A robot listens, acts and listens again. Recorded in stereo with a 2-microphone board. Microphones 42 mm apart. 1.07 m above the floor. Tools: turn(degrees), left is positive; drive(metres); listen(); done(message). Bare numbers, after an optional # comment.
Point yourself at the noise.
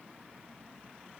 listen()
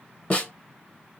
# The snare drum: about 35° left or 145° left.
turn(35)
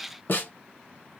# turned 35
# So it is at 100° left.
turn(100)
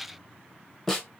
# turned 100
done("Facing the snare drum.")